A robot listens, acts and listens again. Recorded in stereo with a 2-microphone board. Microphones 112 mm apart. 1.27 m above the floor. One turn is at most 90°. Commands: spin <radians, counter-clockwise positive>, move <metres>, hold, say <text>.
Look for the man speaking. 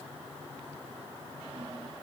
hold
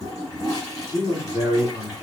spin 0.87
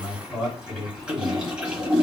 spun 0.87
say Found it: a man speaking, straight ahead, over 4 m away.